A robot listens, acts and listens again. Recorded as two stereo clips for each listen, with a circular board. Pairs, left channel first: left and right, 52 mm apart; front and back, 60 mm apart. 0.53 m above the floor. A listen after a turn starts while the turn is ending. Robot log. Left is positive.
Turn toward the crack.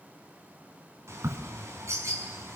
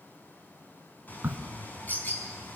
note: The crack: 120° right.
cmd yaw -120
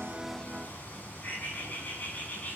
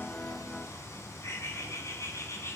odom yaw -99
note: Nothing new. It was at 20° right.
cmd yaw -20
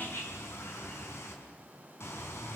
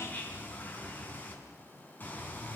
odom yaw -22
end: I heard a crack from this way, but can't make it out now.